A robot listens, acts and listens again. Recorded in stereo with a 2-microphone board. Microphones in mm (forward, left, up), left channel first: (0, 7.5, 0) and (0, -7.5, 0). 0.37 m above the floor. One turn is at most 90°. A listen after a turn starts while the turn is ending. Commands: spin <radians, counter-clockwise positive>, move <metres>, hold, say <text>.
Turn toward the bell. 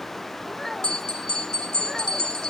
spin 1.57
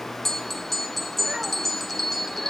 say Facing the bell.